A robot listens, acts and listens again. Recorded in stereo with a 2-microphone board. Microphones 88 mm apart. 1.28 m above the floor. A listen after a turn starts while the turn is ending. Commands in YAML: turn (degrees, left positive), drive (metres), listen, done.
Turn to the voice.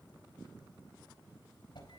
listen: true
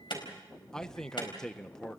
turn: 30
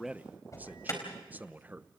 turn: -20
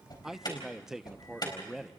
done: "Facing the man speaking."